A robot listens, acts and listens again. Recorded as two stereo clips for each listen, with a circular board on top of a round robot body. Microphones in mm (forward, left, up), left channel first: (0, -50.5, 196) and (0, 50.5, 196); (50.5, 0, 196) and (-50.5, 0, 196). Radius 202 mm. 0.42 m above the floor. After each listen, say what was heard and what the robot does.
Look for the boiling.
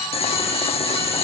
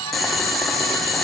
The boiling: 90° right. Turn 90° right.
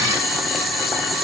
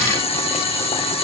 Facing the boiling, 1 to 2 m away.